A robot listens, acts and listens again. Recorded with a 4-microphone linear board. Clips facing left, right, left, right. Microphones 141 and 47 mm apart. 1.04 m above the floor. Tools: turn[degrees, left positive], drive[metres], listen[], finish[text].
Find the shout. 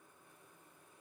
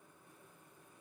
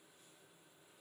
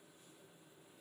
Action: listen[]
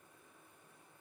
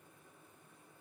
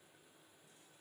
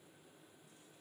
Action: listen[]
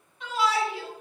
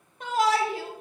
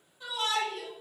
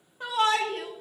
Thought: The shout: about 45° right or 135° right.
Action: turn[-45]
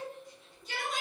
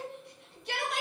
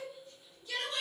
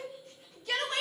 Thought: So it is at 85° right.
Action: turn[-85]
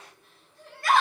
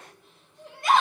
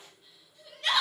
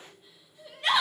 Thought: The shout is now 20° right.
Action: turn[-20]
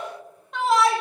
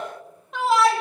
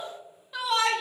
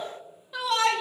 Action: finish[Found it: a shout, straight ahead.]